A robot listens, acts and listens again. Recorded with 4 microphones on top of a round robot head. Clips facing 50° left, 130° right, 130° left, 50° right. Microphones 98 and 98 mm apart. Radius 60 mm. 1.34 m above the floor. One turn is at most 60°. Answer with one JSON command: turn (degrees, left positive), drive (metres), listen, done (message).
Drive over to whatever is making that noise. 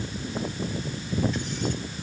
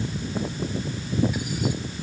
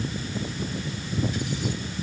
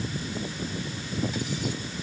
{"listen": true}
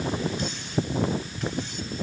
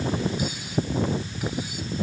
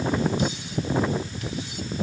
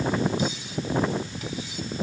{"listen": true}
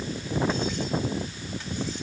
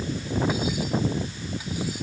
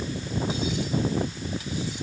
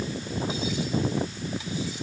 {"done": "I can't make out anything."}